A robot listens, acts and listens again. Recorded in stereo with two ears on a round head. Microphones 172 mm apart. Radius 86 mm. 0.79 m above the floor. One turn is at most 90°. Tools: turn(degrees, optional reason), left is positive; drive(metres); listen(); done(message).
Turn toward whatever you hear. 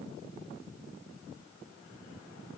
listen()
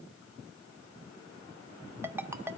turn(degrees=-30)
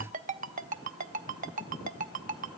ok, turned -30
turn(degrees=-90, reason="So it is at 140° right.")
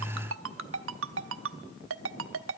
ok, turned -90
turn(degrees=-75, reason="The ringtone is now 75° right.")
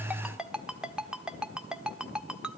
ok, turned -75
done("Facing the ringtone, under 1 m away.")